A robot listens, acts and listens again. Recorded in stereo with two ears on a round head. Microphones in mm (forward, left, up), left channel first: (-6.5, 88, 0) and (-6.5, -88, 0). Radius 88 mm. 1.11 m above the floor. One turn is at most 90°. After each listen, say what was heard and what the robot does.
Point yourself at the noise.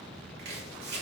The chopping: about 60° right or 120° right. Turn 60° right.
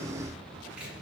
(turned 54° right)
Keep listening.
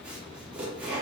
Facing the chopping, 2 to 4 m away.